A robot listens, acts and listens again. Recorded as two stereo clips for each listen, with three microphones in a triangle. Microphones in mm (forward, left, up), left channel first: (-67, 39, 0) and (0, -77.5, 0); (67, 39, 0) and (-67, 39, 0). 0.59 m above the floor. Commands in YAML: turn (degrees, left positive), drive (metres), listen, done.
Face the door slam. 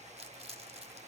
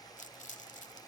listen: true
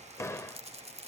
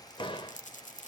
turn: 50
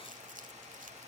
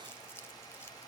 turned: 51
done: "Facing where the door slam came from. I can't hear it now."